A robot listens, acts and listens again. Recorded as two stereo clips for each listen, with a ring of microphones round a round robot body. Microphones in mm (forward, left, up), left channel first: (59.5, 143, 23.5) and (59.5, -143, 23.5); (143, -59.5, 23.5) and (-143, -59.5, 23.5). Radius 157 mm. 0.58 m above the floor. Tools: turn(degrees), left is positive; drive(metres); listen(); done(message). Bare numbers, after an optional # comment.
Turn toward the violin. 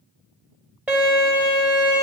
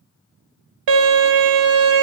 # The violin: 175° right.
turn(-175)
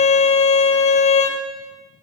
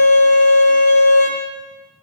# The violin is now 40° left.
turn(40)
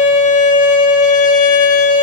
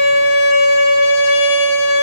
# The violin is now 25° left.
turn(25)
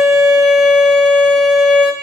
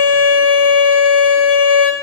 done("Facing the violin, 1 to 2 m away.")